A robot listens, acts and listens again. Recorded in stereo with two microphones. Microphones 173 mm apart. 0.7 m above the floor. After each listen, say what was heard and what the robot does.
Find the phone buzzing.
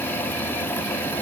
Keep listening.
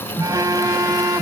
The phone buzzing: about 20° right or 160° right. Turn 20° right.
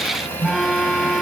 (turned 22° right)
Facing the phone buzzing.